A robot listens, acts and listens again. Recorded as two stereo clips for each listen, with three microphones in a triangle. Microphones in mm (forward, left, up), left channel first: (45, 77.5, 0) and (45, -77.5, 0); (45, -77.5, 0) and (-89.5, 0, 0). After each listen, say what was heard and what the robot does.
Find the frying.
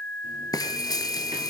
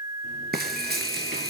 The frying: 155° left. Turn 155° left.
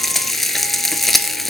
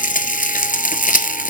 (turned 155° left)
Facing the frying, 1 to 2 m away.